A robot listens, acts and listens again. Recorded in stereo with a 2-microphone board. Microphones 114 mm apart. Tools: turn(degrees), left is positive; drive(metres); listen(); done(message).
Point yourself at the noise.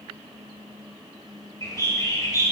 turn(degrees=30)
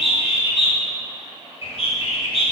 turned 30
turn(degrees=120)
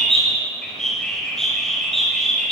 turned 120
done("Found it: a bird, straight ahead.")